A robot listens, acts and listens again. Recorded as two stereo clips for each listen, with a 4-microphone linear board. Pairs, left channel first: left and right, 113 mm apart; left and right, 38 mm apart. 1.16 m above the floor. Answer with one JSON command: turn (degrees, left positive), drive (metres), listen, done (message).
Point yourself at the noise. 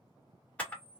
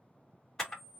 {"turn": 30}
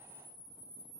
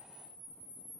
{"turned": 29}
{"turn": 140}
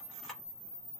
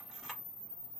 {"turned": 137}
{"done": "Found it: a camera shutter, straight ahead, 1 to 2 m away."}